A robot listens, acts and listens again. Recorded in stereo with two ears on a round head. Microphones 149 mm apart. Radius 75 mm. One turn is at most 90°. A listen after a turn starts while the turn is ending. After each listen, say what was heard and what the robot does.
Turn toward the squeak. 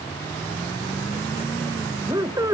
The squeak: about 20° right or 160° right. Turn 20° right.
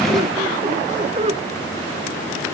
So it is at 140° right. Turn 90° right.
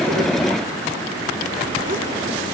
Nothing new. It was at 50° right. Turn 50° right.
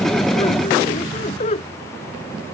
The squeak is now 40° left. Turn 40° left.
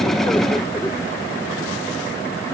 Keep listening.
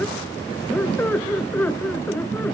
The squeak is now 10° left. Turn 10° left.
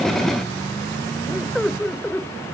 Facing the squeak.